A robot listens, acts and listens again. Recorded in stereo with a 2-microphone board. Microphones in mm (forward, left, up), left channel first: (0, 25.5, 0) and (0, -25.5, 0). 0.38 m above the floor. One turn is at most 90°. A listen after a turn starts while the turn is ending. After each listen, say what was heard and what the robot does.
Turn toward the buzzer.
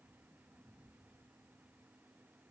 Keep listening.
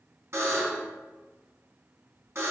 The buzzer: about 65° right or 115° right. Turn 65° right.
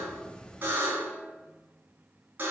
So it is at 40° right. Turn 40° right.
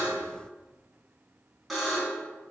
Facing the buzzer, 2 to 4 m away.